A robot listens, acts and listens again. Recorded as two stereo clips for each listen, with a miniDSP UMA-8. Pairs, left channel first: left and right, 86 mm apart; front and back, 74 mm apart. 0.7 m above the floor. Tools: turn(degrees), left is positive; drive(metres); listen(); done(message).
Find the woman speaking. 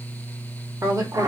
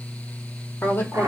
turn(degrees=-55)
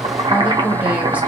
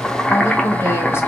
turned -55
turn(degrees=-20)
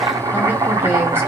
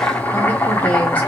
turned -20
listen()
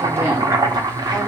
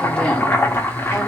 listen()
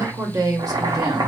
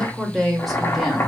turn(degrees=-95)
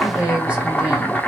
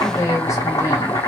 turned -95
turn(degrees=-20)
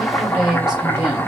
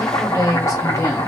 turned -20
done("Found it: a woman speaking, straight ahead, 1 to 2 m away.")